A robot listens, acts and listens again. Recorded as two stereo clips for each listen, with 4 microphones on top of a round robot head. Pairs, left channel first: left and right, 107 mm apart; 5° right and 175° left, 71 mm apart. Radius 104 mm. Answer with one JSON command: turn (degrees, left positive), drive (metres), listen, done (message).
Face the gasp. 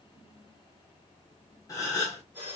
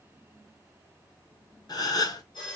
{"turn": 25}
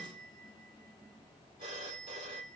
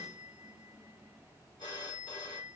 {"done": "I heard a gasp from this way, but can't make it out now."}